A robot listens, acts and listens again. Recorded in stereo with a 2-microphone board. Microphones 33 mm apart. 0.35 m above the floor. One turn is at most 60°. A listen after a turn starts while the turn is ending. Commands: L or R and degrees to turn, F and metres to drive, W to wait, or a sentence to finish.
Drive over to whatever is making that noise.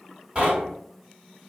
R35
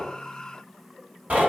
R60
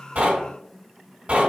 R55
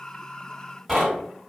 F1.0
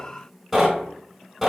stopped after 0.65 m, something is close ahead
R10
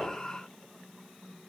W
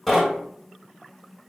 I am next to the knocking.